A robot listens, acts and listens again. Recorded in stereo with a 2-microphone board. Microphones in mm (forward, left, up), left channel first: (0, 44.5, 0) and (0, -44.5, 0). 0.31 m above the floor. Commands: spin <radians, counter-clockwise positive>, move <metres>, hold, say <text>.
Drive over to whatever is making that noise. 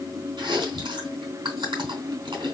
spin -1.13
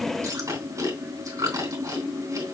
spin -0.79
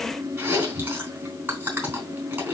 spin -0.44
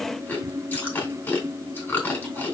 spin 0.44
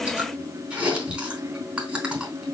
spin -0.26
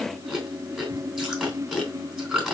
move 1.0
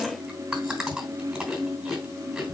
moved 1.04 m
spin -0.17
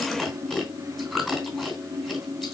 move 1.0
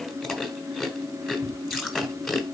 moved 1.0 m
move 1.0
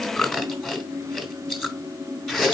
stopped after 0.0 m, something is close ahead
say Arrived at the chewing, straight ahead.